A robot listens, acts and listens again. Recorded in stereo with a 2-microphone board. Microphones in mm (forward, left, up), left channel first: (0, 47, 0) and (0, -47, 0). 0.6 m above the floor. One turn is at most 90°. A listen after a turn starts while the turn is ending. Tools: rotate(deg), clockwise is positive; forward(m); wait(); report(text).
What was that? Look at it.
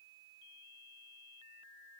wait()
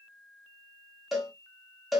rotate(-30)
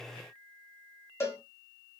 rotate(-90)
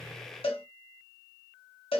rotate(-85)
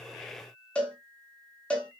rotate(-15)
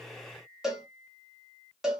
report("Found it: a cowbell, straight ahead, 1 to 2 m away.")